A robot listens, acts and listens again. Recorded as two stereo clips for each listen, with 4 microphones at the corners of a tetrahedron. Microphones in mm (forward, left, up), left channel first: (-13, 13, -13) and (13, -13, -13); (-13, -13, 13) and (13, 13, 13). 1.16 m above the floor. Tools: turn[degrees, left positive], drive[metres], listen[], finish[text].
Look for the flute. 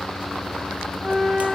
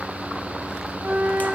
Thought: The flute: 10° left.
Action: turn[10]
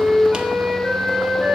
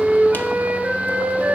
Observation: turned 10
Action: finish[Facing the flute.]